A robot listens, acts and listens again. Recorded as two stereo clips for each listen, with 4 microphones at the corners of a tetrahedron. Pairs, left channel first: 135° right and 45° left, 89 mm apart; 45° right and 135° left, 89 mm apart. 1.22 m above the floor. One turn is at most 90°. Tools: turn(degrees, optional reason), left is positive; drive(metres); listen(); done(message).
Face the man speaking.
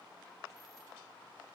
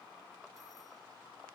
listen()
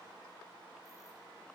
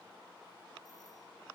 listen()
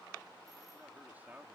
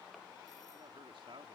turn(degrees=90, reason="The man speaking: 115° left.")
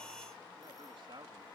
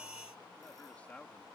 turn(degrees=30, reason="The man speaking is now 30° left.")
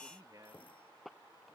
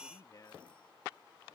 done("Facing the man speaking.")